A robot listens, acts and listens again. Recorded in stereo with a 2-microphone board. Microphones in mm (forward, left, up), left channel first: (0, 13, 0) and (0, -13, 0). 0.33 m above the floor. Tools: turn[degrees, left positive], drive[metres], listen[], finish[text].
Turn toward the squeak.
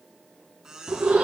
Thought: The squeak: about 25° right or 155° right.
Action: turn[-25]
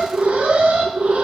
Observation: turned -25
Action: listen[]
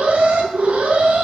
Action: listen[]
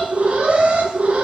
Action: finish[I heard a squeak, but can't make it out now. It was about straight ahead or 130° right.]